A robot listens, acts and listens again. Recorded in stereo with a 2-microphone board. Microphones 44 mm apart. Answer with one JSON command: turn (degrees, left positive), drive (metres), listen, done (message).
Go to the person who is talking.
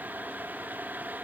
{"listen": true}
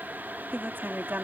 {"turn": -55}
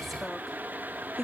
{"drive": 1.0}
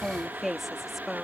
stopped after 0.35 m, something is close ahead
{"done": "Something is in my way. I am facing the woman speaking but have not reached it."}